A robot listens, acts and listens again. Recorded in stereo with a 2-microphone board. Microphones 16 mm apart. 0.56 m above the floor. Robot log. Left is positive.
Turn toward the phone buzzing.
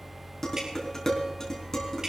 cmd idle
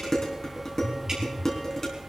note: The phone buzzing: about 50° left or 130° left.
cmd yaw +50
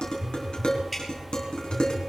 end: Found it: a phone buzzing, straight ahead, 1 to 2 m away.